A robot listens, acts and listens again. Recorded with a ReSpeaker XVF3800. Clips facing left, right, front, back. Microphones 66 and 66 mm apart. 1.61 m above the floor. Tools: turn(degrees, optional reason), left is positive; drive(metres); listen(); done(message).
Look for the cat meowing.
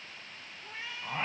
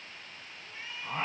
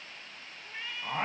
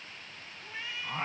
turn(degrees=90, reason="The cat meowing: 90° left.")
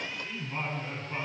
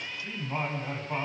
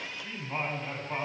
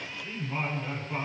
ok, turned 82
turn(degrees=10, reason="Nothing new. It was at 10° left.")
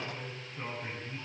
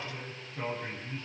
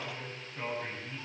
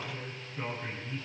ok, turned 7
listen()
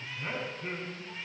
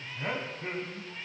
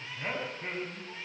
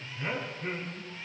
done("Facing where the cat meowing came from. I can't hear it now.")